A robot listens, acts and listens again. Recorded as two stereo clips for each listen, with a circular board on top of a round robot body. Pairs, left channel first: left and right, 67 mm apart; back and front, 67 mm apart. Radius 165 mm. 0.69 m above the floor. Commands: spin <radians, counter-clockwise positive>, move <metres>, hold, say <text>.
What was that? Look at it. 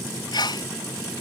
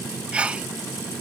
spin 1.31
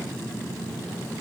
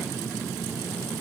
say I heard a sneeze from this way, but can't make it out now.